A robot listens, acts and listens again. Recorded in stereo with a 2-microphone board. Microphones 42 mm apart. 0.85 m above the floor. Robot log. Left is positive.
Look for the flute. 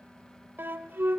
note: The flute: about 55° right or 125° right.
cmd yaw -55
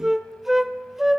end: Found it: a flute, straight ahead.